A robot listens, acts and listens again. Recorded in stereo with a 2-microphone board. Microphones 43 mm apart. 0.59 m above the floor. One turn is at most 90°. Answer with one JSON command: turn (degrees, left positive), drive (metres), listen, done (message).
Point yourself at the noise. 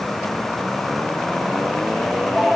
{"turn": -25}
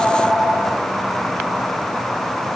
{"turn": -90}
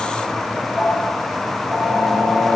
{"turn": -60}
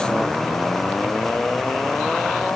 {"listen": true}
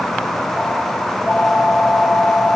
{"turn": 15}
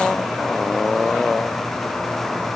{"listen": true}
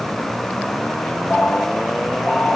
{"done": "Found it: a phone ringing, straight ahead."}